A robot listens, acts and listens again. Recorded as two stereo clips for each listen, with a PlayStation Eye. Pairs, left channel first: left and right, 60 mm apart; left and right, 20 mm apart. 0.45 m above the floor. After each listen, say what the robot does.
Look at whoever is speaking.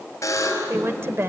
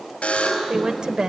Turn 45° right.
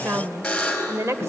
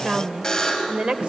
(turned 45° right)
Turn 75° right.
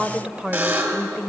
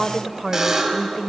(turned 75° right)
Turn 20° right.
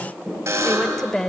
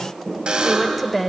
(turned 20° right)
Facing the woman speaking.